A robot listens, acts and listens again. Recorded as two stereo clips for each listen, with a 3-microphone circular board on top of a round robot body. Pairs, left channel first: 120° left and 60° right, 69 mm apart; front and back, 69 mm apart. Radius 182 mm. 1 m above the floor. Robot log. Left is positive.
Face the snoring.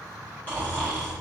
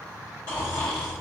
note: The snoring: 55° left.
cmd yaw +55
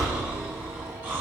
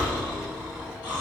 end: Facing the snoring.